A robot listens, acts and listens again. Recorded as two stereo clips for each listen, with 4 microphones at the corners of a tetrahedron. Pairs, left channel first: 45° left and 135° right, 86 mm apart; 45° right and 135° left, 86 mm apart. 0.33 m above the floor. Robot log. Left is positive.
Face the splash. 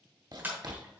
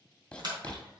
note: The splash: 160° left.
cmd yaw +160
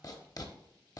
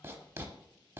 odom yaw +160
end: Facing where the splash came from. I can't hear it now.